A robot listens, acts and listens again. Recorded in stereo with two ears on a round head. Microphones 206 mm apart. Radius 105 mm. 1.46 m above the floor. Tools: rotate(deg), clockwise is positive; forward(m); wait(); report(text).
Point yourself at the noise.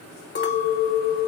rotate(-50)
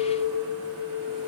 rotate(-75)
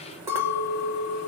rotate(15)
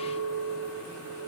report("Found it: a clink, straight ahead.")